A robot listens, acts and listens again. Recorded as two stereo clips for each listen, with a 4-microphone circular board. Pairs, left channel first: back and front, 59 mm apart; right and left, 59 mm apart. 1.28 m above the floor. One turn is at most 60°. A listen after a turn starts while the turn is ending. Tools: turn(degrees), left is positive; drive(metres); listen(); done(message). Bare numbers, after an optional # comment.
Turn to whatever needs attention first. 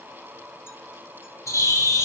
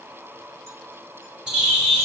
listen()
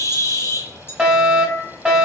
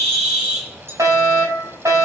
# The fire alarm: 80° left.
turn(60)
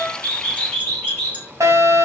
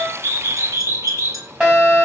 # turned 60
# The fire alarm is now 20° left.
turn(20)
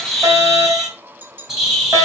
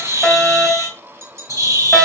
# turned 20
done("Facing the fire alarm, 2 to 4 m away.")